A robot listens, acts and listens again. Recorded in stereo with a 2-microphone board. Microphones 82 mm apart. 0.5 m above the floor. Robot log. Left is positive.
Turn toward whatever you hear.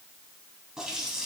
cmd yaw -30
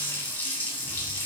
note: So it is at 25° left.
cmd yaw +25
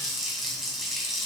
end: Facing the running tap.